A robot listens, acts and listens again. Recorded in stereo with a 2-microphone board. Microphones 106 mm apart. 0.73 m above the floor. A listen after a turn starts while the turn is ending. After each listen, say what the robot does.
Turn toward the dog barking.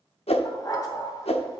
Turn 40° left.
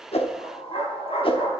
Turn 105° left.
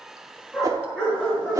Turn 10° left.
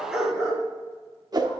Facing the dog barking, over 4 m away.